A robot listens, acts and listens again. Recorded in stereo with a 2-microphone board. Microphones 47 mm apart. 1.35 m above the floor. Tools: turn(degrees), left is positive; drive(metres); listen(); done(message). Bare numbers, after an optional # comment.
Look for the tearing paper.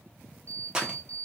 # The tearing paper: about 15° right or 165° right.
turn(-15)
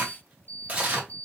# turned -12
# So it is at 150° right.
turn(-150)
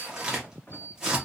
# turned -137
# The tearing paper is now 15° right.
turn(-15)
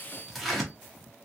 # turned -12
done("Facing the tearing paper, under 1 m away.")